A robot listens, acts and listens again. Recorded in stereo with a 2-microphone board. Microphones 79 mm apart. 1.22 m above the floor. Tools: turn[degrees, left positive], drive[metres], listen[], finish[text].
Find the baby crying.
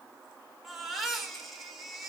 Action: turn[30]
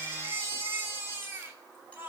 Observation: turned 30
Thought: So it is at 25° right.
Action: turn[-25]
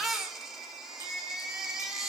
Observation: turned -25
Action: finish[Found it: a baby crying, straight ahead.]